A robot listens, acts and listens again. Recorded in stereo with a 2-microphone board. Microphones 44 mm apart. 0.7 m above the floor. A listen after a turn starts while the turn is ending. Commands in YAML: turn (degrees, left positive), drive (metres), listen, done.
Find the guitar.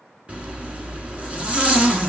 listen: true
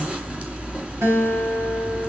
turn: -90
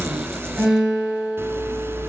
turn: -15
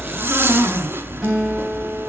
listen: true
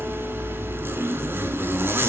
listen: true
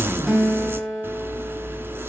done: "Facing the guitar."